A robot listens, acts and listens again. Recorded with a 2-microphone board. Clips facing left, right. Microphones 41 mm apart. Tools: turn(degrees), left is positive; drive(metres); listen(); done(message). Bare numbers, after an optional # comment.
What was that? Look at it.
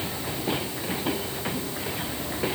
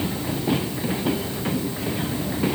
listen()
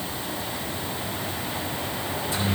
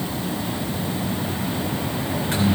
turn(-90)
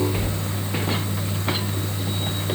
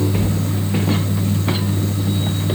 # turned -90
# So it is at 10° left.
turn(10)
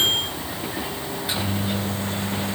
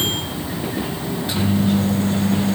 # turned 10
done("Facing the microwave.")